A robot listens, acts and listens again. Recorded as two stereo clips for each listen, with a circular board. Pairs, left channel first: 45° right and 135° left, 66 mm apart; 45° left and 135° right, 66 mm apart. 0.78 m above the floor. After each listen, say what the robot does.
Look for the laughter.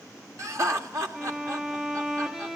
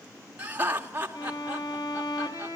Turn 165° left.
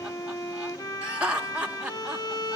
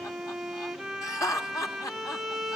Turn 65° left.
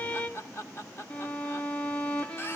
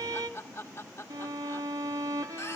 Facing the laughter, 1 to 2 m away.